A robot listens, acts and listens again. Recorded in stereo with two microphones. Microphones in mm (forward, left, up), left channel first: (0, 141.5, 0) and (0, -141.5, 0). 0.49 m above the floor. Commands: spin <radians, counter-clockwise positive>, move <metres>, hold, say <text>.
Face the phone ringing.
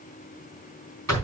hold
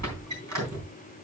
hold
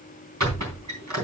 say I can't make out a phone ringing, only a squeak.